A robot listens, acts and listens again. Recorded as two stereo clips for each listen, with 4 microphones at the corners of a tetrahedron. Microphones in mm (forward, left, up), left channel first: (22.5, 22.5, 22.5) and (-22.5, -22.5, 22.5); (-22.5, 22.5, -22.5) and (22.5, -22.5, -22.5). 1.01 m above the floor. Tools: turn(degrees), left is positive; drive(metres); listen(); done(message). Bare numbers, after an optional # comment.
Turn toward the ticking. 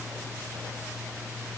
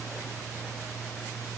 listen()
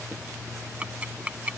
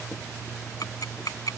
# The ticking: 155° left.
turn(155)
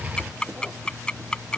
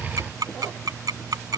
# The ticking is now 30° right.
turn(-30)
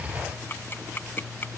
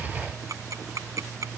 # The ticking is now 10° right.
turn(-10)
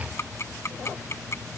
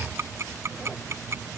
done("Found it: ticking, straight ahead.")